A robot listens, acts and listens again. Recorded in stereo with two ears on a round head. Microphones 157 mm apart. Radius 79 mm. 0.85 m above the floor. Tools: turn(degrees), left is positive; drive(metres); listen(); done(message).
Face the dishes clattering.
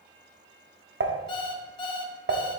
turn(degrees=-65)
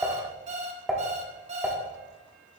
done("Facing the dishes clattering.")